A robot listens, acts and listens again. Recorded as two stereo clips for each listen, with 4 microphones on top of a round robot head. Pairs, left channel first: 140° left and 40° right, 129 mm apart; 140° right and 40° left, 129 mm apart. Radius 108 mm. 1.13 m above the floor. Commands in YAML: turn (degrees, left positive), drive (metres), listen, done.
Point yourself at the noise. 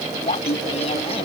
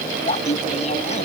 turn: -175
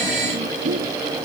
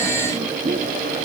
turn: -25
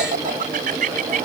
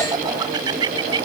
turn: -20
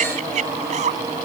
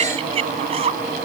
done: "Found it: laughter, straight ahead."